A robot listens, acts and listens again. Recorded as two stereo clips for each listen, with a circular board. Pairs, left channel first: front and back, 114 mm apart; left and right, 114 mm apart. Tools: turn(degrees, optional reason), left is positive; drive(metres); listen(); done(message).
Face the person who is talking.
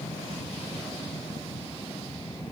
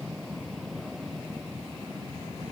listen()
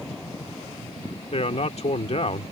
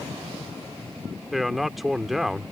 done("Found it: a man speaking, straight ahead.")